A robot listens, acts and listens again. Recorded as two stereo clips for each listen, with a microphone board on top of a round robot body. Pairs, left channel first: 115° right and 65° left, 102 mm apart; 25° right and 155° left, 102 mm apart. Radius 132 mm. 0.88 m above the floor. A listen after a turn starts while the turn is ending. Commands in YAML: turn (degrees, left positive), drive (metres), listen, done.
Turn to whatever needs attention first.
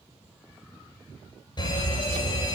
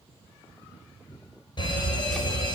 turn: -65
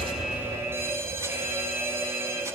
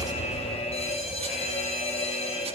done: "Found it: a fire alarm, straight ahead, over 4 m away."